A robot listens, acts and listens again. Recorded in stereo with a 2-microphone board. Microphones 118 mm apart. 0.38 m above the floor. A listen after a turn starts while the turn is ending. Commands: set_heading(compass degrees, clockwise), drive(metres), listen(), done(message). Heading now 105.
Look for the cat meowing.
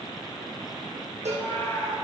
set_heading(80)
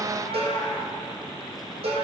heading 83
set_heading(318)
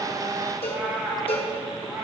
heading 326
set_heading(346)
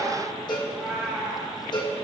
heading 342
set_heading(352)
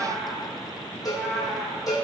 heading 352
done("Found it: a cat meowing, straight ahead, 2 to 4 m away.")